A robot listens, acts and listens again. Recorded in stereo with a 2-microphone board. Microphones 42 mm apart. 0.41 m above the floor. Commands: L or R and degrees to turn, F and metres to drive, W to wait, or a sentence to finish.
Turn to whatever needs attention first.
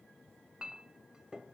W
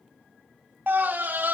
R50
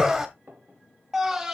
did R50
R15
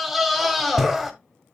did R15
Facing the scream.